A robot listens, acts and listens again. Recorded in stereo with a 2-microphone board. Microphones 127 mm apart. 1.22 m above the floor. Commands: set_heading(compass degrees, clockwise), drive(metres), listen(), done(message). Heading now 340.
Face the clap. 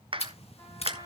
set_heading(25)
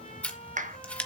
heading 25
set_heading(120)
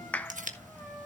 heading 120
set_heading(110)
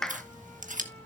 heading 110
done("Found it: a clap, straight ahead, 1 to 2 m away.")